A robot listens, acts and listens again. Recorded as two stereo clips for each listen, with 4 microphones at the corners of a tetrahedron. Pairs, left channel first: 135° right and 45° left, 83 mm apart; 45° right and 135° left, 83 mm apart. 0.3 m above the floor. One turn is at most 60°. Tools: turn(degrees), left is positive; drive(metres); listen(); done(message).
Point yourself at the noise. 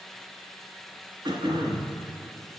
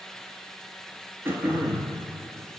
turn(degrees=60)
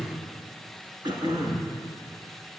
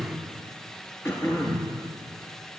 turn(degrees=15)
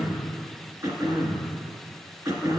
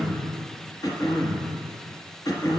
done("Facing the throat clearing.")